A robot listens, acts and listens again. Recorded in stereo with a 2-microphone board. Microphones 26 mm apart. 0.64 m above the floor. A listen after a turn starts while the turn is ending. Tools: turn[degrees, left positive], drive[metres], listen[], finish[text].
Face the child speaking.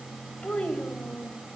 Thought: The child speaking: about 60° left or 120° left.
Action: turn[60]
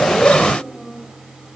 Thought: So it is at 10° right.
Action: turn[-10]
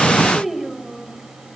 Thought: The child speaking is now 15° right.
Action: turn[-15]
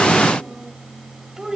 Thought: The child speaking is now 25° right.
Action: turn[-25]
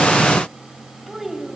Thought: The child speaking is now 10° right.
Action: turn[-10]
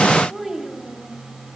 Action: finish[Found it: a child speaking, straight ahead, 2 to 4 m away.]